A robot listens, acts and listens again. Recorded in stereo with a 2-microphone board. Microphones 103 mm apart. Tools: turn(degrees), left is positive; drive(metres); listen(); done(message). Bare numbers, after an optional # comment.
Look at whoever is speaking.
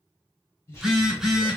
# The man speaking: about 30° left or 150° left.
turn(30)
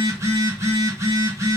listen()
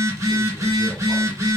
listen()
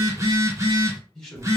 # So it is at 10° left.
turn(10)
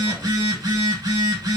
listen()
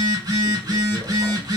listen()
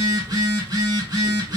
done("Facing where the man speaking came from. I can't hear it now.")